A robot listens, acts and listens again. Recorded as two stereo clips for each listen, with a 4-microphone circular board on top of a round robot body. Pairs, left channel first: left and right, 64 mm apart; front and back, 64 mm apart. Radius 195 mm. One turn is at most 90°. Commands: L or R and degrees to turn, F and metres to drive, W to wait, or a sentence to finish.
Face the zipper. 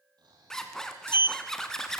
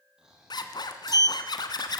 Facing the zipper, 1 to 2 m away.